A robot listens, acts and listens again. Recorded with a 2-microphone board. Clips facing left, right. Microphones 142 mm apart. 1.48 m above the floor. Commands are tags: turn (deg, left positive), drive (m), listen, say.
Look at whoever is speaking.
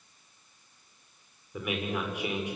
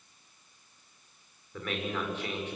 <turn deg="30"/>
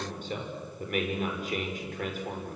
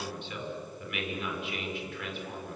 <turn deg="135"/>
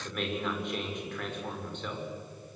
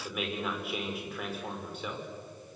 <say>Facing the man speaking.</say>